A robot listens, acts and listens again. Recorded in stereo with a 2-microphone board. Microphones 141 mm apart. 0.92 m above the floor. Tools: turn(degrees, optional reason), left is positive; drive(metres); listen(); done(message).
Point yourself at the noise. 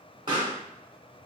turn(degrees=-35, reason="The pop: about 35° right or 145° right.")
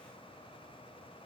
listen()
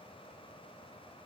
done("I heard a pop, but can't make it out now. It was about straight ahead or 110° right.")